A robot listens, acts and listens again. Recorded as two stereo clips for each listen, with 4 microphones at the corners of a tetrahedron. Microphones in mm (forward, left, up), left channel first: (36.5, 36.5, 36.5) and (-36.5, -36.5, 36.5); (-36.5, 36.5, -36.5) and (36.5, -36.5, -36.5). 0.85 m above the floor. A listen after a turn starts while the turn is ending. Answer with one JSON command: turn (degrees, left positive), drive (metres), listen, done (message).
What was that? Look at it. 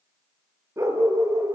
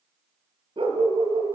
{"turn": -80}
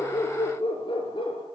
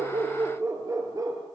{"turn": 10}
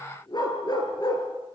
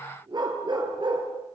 {"done": "Facing the dog barking, over 4 m away."}